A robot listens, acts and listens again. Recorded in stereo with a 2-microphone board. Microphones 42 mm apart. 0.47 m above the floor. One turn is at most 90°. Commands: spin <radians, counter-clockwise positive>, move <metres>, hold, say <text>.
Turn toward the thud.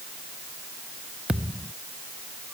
spin -0.44
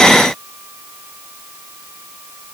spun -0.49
hold
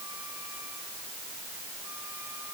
say I heard a thud, but can't make it out now. It was about 5° left or 130° right.